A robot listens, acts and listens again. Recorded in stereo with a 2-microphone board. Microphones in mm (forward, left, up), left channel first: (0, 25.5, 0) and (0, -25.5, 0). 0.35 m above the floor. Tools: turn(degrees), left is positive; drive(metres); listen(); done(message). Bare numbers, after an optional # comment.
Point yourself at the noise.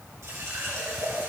# The running tap: about 70° right or 110° right.
turn(-70)
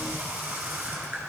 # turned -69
# So it is at 40° right.
turn(-40)
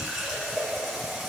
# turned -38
done("Facing the running tap, 2 to 4 m away.")